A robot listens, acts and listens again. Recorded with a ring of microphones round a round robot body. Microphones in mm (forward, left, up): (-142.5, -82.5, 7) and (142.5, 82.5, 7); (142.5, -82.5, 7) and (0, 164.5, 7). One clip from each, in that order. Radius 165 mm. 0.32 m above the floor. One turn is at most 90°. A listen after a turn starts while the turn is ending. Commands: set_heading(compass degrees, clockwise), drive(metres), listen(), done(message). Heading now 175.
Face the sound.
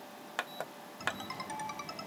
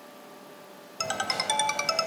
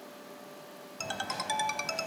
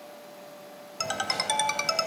set_heading(120)
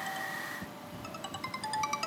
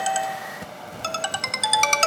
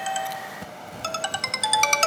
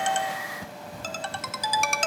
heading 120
done("Facing the ringtone.")